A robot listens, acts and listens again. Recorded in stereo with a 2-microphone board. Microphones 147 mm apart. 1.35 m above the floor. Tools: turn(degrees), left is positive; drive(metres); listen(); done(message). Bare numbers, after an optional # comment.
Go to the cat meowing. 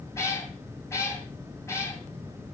# The cat meowing: about 20° left or 160° left.
turn(20)
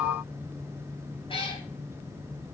# So it is at 140° left.
turn(140)
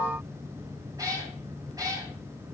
# The cat meowing is now 25° right.
turn(-25)
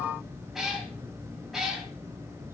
drive(1.0)
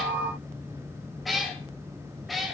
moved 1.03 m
drive(1.0)
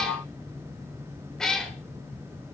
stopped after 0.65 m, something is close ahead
done("I am next to the cat meowing.")